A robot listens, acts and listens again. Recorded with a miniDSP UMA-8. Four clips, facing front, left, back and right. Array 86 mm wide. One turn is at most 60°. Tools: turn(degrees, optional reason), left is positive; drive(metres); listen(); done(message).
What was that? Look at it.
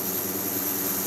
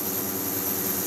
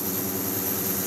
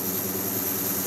listen()
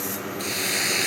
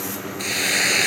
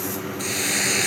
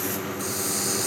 turn(degrees=60, reason="The hiss: 95° left.")
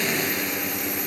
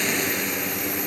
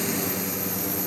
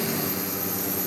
turn(degrees=35, reason="Nothing new. It was at 35° left.")
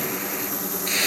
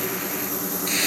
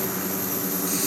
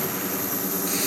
turn(degrees=35, reason="The hiss is now 35° left.")
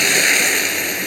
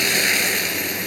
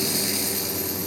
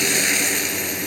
turn(degrees=10, reason="The hiss is now 10° left.")
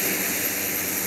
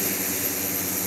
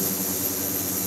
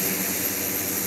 listen()
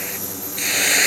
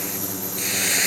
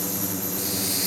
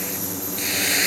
done("Facing the hiss.")